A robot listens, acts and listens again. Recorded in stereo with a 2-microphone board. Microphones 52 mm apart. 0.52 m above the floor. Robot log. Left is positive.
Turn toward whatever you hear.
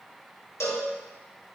note: The cowbell: about 60° left or 120° left.
cmd yaw +60
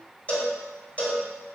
note: So it is at 30° left.
cmd yaw +30
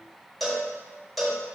end: Facing the cowbell, 1 to 2 m away.